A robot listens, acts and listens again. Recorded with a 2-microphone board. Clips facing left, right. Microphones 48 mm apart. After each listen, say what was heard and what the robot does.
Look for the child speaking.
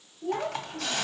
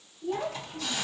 The child speaking: about 55° left or 125° left. Turn 55° left.
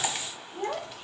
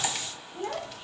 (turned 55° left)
So it is at 65° left. Turn 65° left.
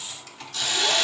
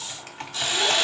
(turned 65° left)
Keep listening.
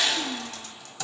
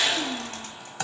Keep listening.
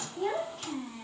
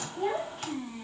Facing the child speaking, 2 to 4 m away.